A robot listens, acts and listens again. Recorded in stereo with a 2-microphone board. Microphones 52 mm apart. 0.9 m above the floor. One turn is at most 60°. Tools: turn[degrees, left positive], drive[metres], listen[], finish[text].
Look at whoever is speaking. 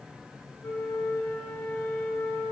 Action: listen[]
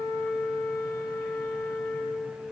Action: listen[]
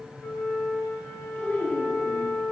Thought: The child speaking: about 15° left or 165° left.
Action: turn[15]
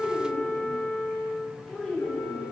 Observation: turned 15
Action: turn[30]
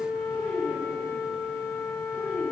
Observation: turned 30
Thought: So it is at 20° right.
Action: turn[-20]
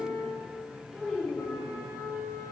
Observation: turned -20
Action: finish[Found it: a child speaking, straight ahead, 2 to 4 m away.]